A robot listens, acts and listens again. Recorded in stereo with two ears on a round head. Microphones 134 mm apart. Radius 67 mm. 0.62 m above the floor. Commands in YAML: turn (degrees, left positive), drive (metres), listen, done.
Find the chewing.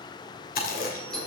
turn: 65
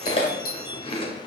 turn: 40
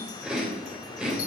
done: "Found it: chewing, straight ahead, 2 to 4 m away."